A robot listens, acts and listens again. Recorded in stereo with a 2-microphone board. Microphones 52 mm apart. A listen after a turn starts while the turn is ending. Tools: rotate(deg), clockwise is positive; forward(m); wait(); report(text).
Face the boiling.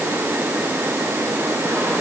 wait()
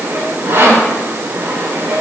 wait()
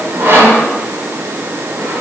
report("I can't make out boiling, only sawing.")